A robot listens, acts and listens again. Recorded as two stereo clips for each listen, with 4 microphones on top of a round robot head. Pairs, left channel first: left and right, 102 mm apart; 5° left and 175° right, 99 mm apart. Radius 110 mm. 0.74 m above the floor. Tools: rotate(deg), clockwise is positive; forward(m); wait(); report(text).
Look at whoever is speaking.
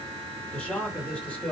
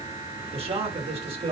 rotate(-170)
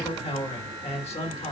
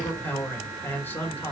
rotate(-75)
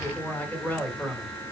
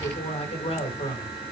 rotate(-15)
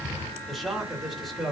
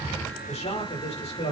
report("Facing the man speaking, 2 to 4 m away.")